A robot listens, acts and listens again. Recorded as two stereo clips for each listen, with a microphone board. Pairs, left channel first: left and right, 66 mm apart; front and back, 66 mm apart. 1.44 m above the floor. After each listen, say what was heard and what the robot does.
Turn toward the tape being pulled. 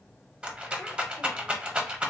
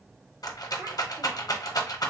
Keep listening.
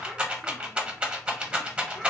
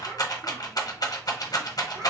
Keep listening.
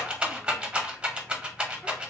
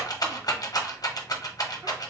I can't make out tape being pulled to turn to.